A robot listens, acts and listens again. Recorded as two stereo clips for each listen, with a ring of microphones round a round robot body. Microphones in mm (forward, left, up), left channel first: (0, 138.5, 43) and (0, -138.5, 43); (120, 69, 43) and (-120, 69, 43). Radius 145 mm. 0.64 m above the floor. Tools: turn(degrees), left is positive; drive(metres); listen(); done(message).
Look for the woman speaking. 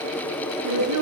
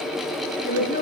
turn(degrees=-65)
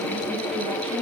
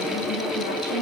listen()
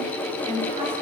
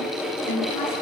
turn(degrees=-20)
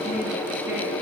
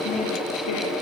listen()
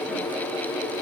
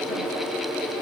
listen()
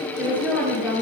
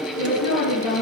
done("Facing the woman speaking, over 4 m away.")